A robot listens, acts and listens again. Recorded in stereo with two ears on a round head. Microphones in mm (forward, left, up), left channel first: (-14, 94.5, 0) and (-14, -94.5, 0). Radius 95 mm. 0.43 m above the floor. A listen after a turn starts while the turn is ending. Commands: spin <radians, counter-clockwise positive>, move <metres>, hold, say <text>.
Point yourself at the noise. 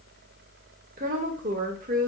spin -0.70
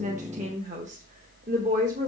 spin -0.61
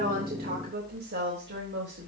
spin -2.18
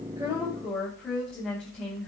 say Facing the woman speaking, 2 to 4 m away.